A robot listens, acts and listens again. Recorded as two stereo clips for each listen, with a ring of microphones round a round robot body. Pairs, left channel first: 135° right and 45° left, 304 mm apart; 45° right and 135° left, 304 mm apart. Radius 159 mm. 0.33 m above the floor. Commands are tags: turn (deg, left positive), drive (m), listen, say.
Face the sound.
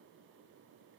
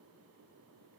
<listen/>
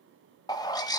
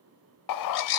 <turn deg="-60"/>
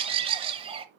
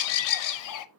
<turn deg="-25"/>
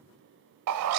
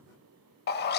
<turn deg="10"/>
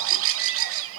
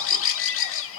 <say>Facing the bird, under 1 m away.</say>